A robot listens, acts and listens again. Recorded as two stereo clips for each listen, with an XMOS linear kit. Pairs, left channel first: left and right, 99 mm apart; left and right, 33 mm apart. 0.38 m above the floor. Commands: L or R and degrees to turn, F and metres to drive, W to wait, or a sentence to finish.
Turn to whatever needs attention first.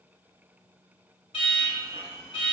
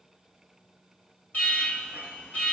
L55
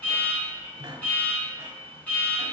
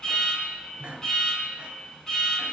L20
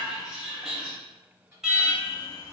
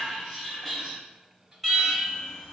Facing the alarm.